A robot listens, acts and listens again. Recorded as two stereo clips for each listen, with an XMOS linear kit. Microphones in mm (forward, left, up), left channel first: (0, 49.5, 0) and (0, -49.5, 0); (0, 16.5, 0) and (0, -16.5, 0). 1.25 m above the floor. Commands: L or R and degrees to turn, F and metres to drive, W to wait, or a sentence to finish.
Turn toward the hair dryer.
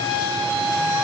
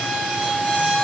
W
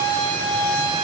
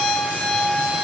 W
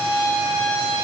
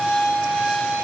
I can't make out a hair dryer to turn to.